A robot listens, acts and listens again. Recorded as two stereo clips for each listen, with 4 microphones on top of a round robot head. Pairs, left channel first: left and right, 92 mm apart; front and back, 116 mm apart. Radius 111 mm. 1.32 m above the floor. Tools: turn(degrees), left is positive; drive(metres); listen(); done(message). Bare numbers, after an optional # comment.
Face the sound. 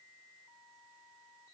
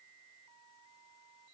listen()
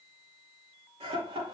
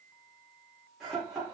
# The laughter: 95° right.
turn(-95)
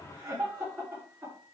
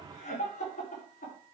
# The laughter is now 10° right.
turn(-10)
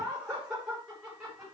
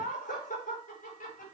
done("Found it: laughter, straight ahead, over 4 m away.")